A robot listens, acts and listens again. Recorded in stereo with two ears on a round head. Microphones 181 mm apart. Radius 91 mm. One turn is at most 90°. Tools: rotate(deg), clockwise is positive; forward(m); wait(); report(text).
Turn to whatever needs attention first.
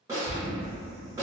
rotate(-30)
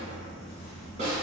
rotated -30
wait()
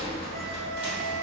rotate(-90)
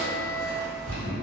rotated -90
rotate(-10)
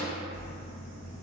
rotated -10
wait()
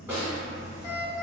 report("Found it: an alarm, straight ahead, 1 to 2 m away.")